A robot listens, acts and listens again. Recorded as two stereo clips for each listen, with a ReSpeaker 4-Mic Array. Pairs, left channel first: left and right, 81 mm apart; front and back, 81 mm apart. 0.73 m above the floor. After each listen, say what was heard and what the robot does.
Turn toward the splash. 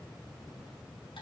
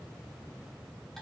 Keep listening.
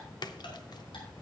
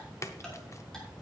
The splash: 55° left. Turn 55° left.
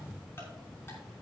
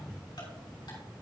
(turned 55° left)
Facing where the splash came from. I can't hear it now.